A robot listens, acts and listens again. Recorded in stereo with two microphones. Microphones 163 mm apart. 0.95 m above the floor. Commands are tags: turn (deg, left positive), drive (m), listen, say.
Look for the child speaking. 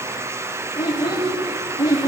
<turn deg="25"/>
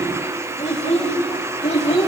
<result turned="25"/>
<turn deg="140"/>
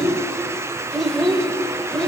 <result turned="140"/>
<say>Found it: a child speaking, straight ahead.</say>